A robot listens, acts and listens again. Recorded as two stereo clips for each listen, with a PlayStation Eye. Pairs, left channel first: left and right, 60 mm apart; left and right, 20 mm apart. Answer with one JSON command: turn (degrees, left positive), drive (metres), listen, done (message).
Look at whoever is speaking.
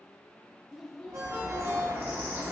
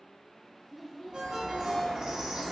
{"turn": 30}
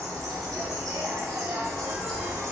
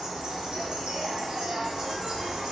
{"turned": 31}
{"listen": true}
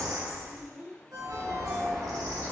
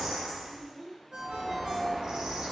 {"turn": -30}
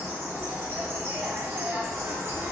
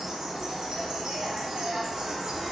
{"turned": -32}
{"listen": true}
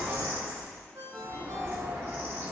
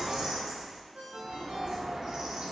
{"listen": true}
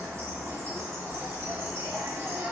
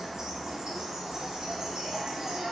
{"done": "Facing where the child speaking came from. I can't hear it now."}